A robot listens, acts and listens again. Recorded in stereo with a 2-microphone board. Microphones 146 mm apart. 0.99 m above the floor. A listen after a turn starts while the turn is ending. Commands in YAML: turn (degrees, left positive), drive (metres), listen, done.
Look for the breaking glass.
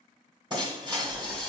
turn: -35
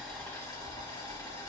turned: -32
listen: true
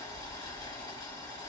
done: "I heard breaking glass, but can't make it out now. It was about straight ahead or 115° right."